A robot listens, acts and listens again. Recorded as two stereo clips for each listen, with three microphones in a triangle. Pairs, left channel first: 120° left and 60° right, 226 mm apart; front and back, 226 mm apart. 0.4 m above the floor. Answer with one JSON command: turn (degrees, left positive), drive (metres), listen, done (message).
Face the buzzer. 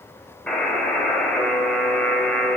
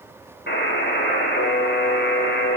{"turn": 35}
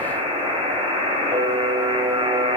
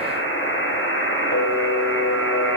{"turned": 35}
{"done": "Facing the buzzer."}